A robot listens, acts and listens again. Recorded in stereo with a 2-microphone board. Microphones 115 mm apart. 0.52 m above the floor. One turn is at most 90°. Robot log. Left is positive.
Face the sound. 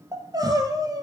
note: The crying: about 35° right or 145° right.
cmd yaw -35
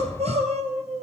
note: So it is at 110° right.
cmd yaw -90
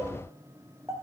note: The crying is now 25° right.
cmd yaw -25
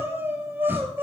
note: The crying is now 15° right.
cmd yaw -15
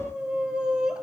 end: Facing the crying.